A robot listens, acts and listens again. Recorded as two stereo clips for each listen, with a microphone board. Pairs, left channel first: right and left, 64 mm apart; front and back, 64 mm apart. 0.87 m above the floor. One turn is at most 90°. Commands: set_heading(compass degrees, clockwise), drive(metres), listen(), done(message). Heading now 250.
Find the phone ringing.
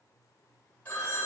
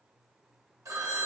set_heading(340)
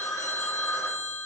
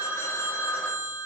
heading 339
set_heading(44)
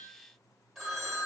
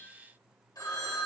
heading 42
done("Found it: a phone ringing, straight ahead.")